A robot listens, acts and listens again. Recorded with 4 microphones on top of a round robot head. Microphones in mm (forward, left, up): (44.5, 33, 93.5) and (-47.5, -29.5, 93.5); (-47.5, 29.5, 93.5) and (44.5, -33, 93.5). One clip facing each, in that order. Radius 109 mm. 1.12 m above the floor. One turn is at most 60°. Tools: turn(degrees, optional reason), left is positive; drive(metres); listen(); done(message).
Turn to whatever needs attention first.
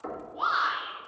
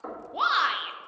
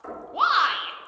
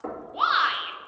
turn(degrees=-60, reason="The shout: 160° right.")
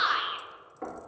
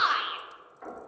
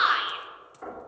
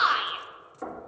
turn(degrees=-60, reason="The shout is now 95° right.")
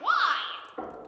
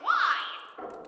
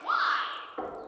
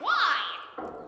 turn(degrees=-35, reason="The shout is now 35° right.")
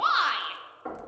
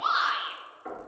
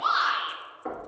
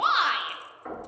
done("Facing the shout.")